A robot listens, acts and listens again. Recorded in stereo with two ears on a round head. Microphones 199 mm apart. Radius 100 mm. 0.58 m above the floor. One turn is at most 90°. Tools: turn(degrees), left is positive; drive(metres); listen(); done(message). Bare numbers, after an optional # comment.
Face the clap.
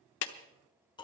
# The clap: about 55° left or 125° left.
turn(55)
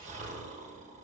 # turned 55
listen()
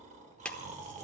done("Found it: a clap, straight ahead, under 1 m away.")